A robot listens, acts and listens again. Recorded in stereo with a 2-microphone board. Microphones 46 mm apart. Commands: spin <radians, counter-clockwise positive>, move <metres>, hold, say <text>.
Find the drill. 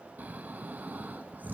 hold
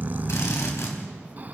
spin 1.31
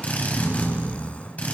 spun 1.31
spin 0.52
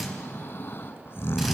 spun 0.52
say Facing the drill, 2 to 4 m away.